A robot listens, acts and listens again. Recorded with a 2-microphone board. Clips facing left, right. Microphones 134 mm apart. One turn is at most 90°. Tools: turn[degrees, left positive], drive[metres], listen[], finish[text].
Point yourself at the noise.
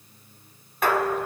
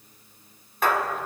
Action: turn[30]
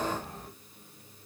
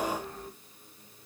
Action: listen[]
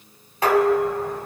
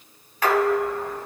Thought: So it is at 150° left.
Action: turn[90]
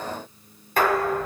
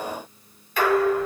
Thought: The dishes clattering is now 50° left.
Action: turn[50]
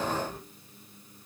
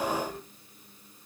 Action: finish[Facing the dishes clattering, 1 to 2 m away.]